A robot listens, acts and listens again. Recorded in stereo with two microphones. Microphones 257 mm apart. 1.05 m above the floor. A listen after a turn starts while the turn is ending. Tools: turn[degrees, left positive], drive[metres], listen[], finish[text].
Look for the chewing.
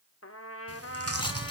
Thought: The chewing: about 65° right or 115° right.
Action: turn[-65]
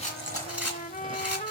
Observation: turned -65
Action: listen[]
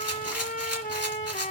Action: listen[]
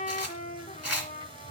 Thought: So it is at 20° right.
Action: turn[-20]
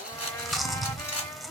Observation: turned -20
Action: finish[Found it: chewing, straight ahead.]